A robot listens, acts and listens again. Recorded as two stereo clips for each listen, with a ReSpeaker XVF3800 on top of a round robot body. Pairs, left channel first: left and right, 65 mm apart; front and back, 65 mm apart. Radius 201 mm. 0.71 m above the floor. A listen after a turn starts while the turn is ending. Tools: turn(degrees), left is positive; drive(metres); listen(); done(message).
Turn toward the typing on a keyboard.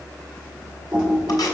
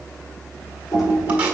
turn(degrees=-25)
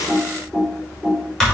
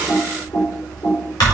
done("Facing the typing on a keyboard, 2 to 4 m away.")